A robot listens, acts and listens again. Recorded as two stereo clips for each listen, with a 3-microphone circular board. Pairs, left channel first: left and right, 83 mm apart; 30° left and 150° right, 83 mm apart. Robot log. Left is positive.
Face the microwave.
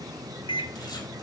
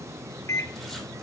note: The microwave: 85° left.
cmd yaw +85
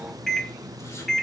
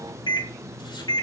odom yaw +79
end: Found it: a microwave, straight ahead.